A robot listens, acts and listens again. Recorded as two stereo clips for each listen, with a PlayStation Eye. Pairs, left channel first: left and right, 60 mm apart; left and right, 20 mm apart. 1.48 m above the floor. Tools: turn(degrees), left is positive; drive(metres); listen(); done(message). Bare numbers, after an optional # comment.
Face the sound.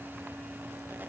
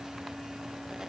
listen()
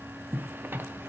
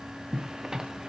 # The zipper: about 35° right or 145° right.
turn(-35)
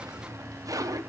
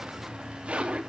# So it is at 110° right.
turn(-110)
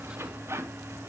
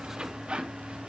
# The zipper is now 45° right.
turn(-45)
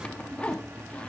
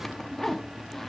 # The zipper is now 20° left.
turn(20)
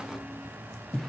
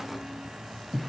done("Found it: a zipper, straight ahead, under 1 m away.")